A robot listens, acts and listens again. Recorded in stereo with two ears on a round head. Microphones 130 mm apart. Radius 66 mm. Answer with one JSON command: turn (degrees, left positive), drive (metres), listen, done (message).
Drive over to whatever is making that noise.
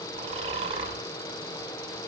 {"turn": -40}
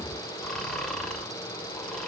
{"drive": 1.0}
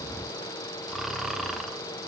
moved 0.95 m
{"drive": 1.0}
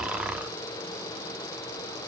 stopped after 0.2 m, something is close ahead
{"turn": -10}
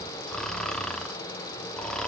{"done": "I am next to the snoring."}